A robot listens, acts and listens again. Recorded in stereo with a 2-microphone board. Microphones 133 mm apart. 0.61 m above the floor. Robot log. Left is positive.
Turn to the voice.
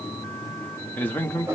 cmd yaw +30
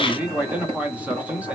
note: So it is at 15° right.
cmd yaw -15
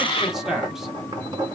end: Found it: a man speaking, straight ahead.